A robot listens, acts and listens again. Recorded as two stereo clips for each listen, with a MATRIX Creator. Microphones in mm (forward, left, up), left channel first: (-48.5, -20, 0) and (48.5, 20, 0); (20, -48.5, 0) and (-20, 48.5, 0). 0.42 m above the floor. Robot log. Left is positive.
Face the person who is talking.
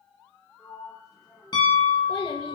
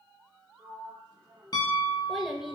note: The child speaking: 160° right.
cmd yaw -160
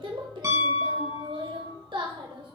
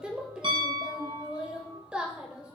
note: The child speaking is now 35° left.
cmd yaw +35
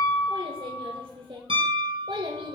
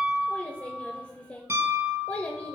end: Found it: a child speaking, straight ahead, under 1 m away.